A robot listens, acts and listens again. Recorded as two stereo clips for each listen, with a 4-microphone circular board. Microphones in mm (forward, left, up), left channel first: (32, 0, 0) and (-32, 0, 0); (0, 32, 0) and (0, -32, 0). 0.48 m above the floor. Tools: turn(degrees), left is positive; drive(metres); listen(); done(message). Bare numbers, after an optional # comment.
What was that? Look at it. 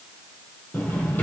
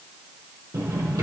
# The drawer: 60° right.
turn(-60)
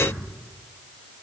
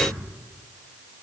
listen()
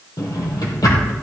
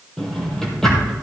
# The drawer is now 10° left.
turn(10)
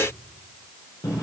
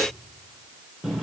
done("Found it: a drawer, straight ahead.")